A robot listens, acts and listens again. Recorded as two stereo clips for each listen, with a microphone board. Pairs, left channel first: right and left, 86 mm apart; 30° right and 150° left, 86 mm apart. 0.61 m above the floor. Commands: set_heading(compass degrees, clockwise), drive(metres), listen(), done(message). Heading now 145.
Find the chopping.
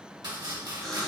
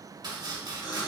set_heading(25)
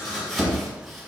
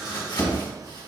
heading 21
done("Facing the chopping.")